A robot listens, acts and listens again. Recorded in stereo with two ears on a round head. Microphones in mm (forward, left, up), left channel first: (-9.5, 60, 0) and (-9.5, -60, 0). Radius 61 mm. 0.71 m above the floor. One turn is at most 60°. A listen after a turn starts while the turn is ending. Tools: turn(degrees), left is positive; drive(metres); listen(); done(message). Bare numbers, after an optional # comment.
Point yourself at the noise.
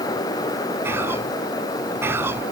# The whispering: about 15° right or 165° right.
turn(-15)
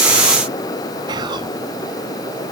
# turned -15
# So it is at 145° right.
turn(-60)
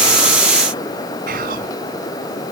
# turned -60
# The whispering is now 100° right.
turn(-60)
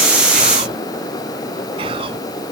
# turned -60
# The whispering is now 40° right.
turn(-40)
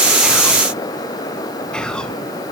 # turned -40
done("Found it: whispering, straight ahead.")